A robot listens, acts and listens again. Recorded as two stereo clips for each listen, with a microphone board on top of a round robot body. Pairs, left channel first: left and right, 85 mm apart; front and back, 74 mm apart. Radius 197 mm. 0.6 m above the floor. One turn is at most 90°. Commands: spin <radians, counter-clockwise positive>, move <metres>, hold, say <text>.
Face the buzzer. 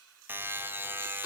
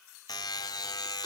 spin -0.44
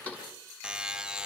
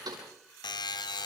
spin -0.17
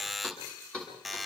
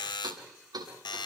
say Facing the buzzer.